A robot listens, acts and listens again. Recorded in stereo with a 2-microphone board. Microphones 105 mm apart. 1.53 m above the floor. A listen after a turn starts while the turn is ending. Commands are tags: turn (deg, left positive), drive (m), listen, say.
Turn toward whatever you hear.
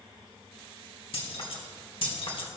<turn deg="55"/>
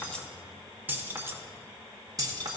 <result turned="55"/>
<turn deg="-40"/>
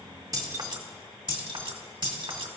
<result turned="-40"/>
<turn deg="-50"/>
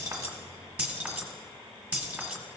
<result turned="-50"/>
<turn deg="-10"/>
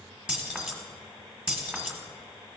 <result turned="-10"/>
<turn deg="-10"/>
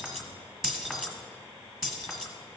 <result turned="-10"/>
<say>Found it: keys jangling, straight ahead, 1 to 2 m away.</say>